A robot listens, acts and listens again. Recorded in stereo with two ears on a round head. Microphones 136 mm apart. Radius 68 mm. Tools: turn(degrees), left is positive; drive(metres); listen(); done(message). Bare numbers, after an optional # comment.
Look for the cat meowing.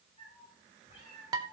# The cat meowing: about 40° left or 140° left.
turn(40)
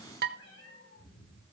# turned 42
# So it is at 95° left.
turn(95)
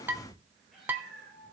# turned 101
done("Facing the cat meowing.")